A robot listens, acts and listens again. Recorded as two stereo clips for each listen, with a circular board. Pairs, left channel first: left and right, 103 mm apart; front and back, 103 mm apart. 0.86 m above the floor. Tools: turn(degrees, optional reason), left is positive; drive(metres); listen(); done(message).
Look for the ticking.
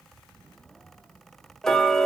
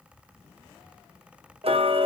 turn(degrees=175, reason="The ticking: 175° left.")
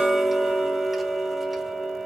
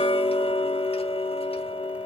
done("Facing the ticking, under 1 m away.")